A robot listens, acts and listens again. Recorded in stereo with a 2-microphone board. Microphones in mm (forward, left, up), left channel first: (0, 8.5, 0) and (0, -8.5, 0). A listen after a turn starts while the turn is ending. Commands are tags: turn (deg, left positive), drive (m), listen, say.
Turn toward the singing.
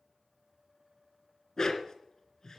<listen/>
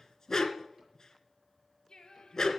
<turn deg="50"/>
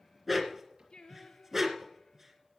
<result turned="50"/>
<turn deg="65"/>
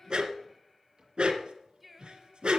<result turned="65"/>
<say>Facing the singing, 2 to 4 m away.</say>